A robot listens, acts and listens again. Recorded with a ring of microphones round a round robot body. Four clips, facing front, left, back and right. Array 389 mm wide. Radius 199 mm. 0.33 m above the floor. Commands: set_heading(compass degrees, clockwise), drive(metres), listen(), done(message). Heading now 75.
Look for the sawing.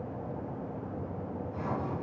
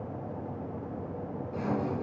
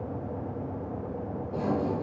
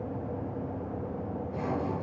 set_heading(275)
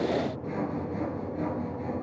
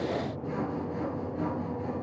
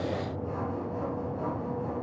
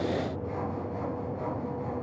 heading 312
set_heading(272)
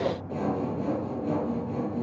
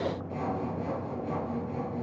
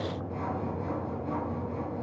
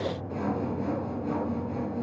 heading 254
set_heading(274)
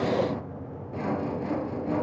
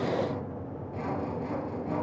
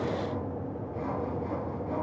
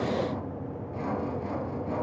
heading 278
done("Facing the sawing.")